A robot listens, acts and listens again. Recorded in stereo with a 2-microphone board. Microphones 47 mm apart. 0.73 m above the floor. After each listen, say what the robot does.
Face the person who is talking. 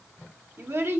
Turn 55° right.
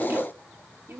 Turn 60° right.
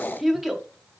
Found it: a child speaking, straight ahead.